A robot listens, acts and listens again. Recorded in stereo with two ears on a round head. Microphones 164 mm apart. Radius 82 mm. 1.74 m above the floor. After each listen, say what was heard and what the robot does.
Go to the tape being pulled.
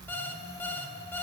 Keep listening.
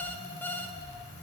Keep listening.
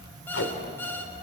The tape being pulled: about 70° left or 110° left. Turn 70° left.
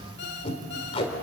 So it is at 35° left. Turn 35° left.
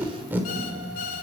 The tape being pulled is now 10° right. Turn 10° right.
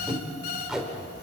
Drive 1.0 m forward.
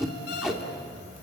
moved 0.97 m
Drive 1.0 m forward.
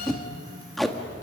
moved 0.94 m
Drive 1.0 m forward.
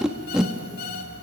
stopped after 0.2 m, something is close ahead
I am next to the tape being pulled.